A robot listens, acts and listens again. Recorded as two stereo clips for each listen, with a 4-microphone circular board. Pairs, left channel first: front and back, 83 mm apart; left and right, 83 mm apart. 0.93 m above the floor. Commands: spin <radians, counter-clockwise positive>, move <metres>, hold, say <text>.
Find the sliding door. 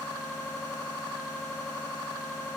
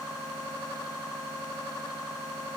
hold
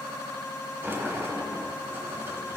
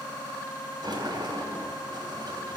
spin -2.09
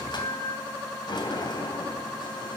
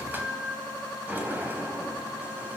spin -0.44
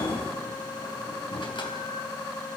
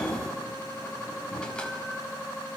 spin 0.17
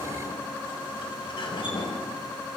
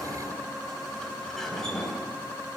say Found it: a sliding door, straight ahead, 2 to 4 m away.